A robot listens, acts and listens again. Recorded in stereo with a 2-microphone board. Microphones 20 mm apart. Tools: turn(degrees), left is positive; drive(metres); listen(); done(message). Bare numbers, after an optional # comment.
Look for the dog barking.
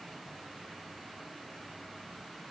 listen()
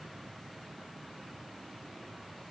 listen()
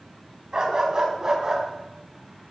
# The dog barking: about 35° right or 145° right.
turn(-35)
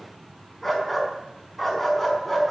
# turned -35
done("Facing the dog barking.")